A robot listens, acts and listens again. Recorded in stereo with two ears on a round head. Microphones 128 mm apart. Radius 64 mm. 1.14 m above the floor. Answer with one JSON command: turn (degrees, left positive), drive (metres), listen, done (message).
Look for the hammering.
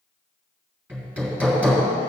{"turn": -30}
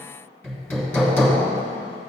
{"turn": 15}
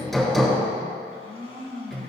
{"done": "Facing the hammering."}